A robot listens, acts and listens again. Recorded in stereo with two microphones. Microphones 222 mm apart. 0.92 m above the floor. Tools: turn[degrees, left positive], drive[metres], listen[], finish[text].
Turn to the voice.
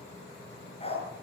Action: listen[]
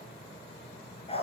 Action: listen[]
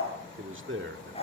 Thought: The man speaking: about 60° right or 120° right.
Action: turn[-60]
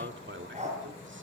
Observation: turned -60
Thought: So it is at 60° right.
Action: turn[-60]
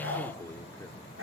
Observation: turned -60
Thought: The man speaking is now 10° left.
Action: turn[10]
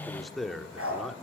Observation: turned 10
Action: finish[Found it: a man speaking, straight ahead.]